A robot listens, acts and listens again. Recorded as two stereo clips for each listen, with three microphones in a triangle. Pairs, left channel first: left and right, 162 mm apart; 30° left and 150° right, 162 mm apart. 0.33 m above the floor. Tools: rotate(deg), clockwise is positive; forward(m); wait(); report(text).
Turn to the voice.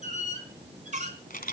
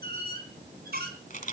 wait()
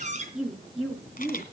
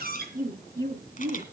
rotate(-180)
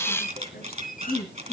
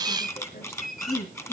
rotate(-65)
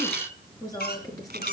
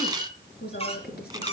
rotate(-20)
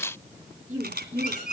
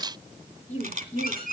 rotate(10)
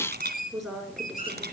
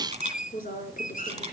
report("Found it: a woman speaking, straight ahead.")